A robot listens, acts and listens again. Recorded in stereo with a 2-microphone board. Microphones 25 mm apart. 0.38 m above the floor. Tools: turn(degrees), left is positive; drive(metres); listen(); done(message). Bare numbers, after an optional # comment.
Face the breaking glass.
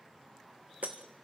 turn(-90)
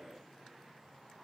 done("Facing where the breaking glass came from. I can't hear it now.")